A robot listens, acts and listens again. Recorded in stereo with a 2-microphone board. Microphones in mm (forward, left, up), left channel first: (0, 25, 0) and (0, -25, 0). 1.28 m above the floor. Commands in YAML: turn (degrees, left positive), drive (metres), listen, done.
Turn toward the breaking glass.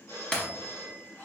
turn: 20
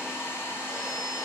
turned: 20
listen: true
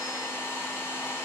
done: "I heard breaking glass, but can't make it out now. It was about straight ahead or 140° left."